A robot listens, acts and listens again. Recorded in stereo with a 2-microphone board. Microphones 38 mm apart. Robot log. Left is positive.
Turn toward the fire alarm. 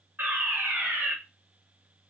note: The fire alarm: about 65° right or 115° right.
cmd yaw -65
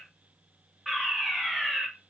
end: Facing the fire alarm.